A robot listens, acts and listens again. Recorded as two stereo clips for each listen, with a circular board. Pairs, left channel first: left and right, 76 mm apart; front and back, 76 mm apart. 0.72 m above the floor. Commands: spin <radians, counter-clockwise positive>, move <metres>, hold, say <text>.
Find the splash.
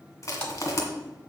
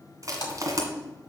spin 0.26
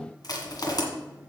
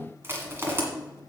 say Facing where the splash came from. I can't hear it now.